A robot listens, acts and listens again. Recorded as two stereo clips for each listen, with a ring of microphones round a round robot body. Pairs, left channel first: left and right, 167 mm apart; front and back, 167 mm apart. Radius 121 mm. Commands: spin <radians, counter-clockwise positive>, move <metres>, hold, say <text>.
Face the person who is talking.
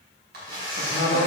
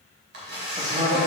spin 2.53
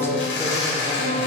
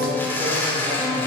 hold
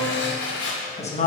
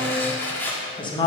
spin 1.05
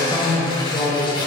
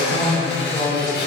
spin 0.61
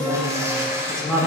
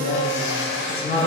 say Facing the man speaking.